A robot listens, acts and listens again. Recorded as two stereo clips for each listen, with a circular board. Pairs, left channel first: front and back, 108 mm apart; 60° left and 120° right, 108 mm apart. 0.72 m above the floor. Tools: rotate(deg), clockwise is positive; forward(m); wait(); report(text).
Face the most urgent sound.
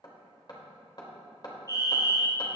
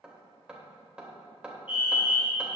rotate(-45)
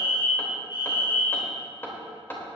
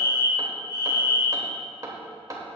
rotate(-20)
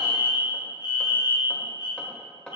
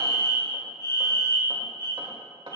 rotate(-10)
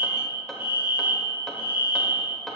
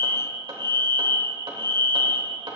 report("Found it: a fire alarm, straight ahead.")